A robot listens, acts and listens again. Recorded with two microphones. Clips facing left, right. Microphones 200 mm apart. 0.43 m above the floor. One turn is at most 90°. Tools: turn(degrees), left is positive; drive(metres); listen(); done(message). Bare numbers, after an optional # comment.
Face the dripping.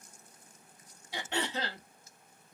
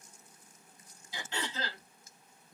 listen()
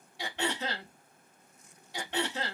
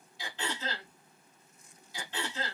listen()
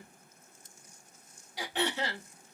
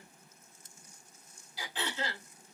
done("I can't make out dripping to turn to.")